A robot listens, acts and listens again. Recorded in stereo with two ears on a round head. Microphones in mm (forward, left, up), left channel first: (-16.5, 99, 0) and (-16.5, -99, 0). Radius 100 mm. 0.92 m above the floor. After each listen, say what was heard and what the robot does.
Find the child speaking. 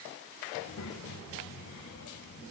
The child speaking: about 65° left or 115° left. Turn 65° left.
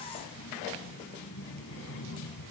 So it is at 60° left. Turn 60° left.
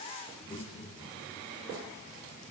The child speaking is now 20° left. Turn 20° left.
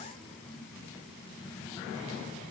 Facing the child speaking, over 4 m away.